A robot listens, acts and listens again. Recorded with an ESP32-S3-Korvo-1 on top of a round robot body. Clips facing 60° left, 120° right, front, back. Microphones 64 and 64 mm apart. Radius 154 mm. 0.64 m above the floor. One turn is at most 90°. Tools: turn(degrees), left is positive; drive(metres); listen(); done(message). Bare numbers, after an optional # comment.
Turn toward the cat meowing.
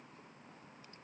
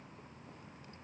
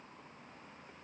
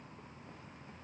listen()
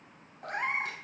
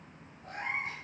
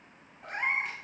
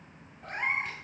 # The cat meowing: 85° left.
turn(85)
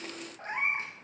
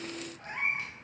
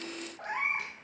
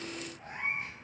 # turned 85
done("Facing the cat meowing.")